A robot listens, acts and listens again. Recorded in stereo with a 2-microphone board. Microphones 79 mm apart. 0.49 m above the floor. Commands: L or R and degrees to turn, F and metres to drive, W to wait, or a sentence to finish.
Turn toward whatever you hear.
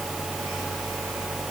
W
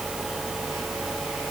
W
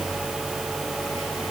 I can't make out anything to turn to.